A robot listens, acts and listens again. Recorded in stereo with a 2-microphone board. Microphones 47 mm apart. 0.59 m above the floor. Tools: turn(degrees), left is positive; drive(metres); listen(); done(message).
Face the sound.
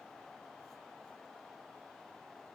listen()
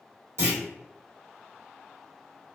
turn(degrees=-65)
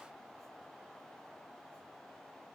listen()
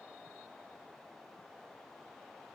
done("I heard a clunk, but can't make it out now. It was about straight ahead or 50° right.")